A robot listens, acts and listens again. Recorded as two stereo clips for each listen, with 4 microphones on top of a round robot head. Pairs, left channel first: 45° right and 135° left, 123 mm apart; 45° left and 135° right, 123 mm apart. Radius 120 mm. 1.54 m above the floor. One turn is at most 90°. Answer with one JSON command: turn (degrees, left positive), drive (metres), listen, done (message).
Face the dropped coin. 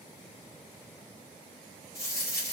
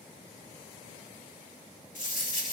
{"turn": 20}
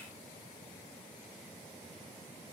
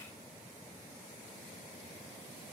{"done": "Facing where the dropped coin came from. I can't hear it now."}